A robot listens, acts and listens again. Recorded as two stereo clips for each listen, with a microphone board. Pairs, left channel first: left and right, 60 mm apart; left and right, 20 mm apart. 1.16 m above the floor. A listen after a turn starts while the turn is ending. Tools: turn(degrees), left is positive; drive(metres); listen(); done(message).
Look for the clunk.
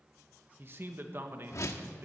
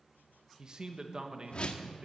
listen()
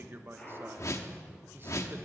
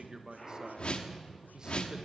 turn(degrees=30)
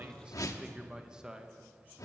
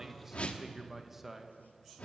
listen()
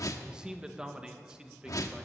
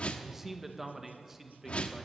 done("I heard a clunk, but can't make it out now. It was about 15° right or 135° left.")